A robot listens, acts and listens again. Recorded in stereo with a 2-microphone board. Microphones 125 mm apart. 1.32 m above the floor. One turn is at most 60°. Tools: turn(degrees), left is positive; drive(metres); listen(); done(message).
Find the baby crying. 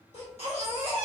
turn(degrees=55)
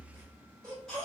done("Found it: a baby crying, straight ahead, 1 to 2 m away.")